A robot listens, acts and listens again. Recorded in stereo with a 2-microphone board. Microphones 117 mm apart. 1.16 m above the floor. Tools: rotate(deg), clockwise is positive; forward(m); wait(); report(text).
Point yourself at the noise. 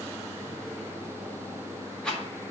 rotate(-30)
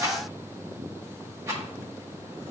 rotate(25)
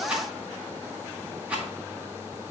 rotate(10)
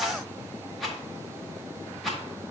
report("Facing the rattle.")